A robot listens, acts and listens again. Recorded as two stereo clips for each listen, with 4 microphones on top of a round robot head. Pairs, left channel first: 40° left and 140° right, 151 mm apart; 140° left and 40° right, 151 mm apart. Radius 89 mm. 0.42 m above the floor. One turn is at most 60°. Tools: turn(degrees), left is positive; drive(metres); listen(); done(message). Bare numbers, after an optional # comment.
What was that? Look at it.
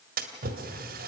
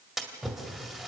# The splash: 130° right.
turn(-60)
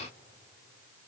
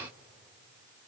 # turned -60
# Nothing new. It was at 70° right.
turn(-60)
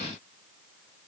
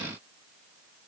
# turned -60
# Nothing new. It was at 10° right.
turn(-10)
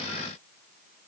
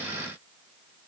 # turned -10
done("Facing where the splash came from. I can't hear it now.")